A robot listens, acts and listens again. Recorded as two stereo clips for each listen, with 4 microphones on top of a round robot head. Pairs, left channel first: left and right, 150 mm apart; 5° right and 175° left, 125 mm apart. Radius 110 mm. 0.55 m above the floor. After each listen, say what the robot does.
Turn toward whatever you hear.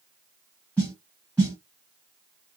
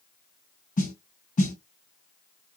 Facing the snare drum.